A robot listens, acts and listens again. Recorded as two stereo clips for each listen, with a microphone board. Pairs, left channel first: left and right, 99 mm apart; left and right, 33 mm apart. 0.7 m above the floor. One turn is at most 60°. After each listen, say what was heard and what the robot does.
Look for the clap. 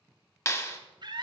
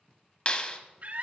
The clap: about 30° left or 150° left. Turn 30° left.
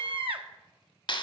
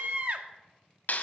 So it is at 115° left. Turn 60° left.
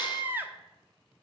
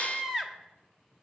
Nothing new. It was at 55° left. Turn 55° left.
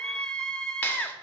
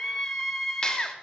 Keep listening.
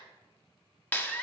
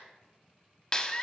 The clap is now 20° left. Turn 20° left.
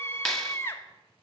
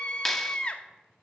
Facing the clap.